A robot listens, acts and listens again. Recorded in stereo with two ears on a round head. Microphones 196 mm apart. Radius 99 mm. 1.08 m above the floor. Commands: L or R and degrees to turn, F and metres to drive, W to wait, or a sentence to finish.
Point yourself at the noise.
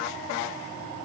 W
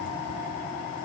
W
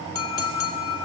L70
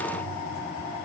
W
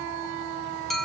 Facing the clink.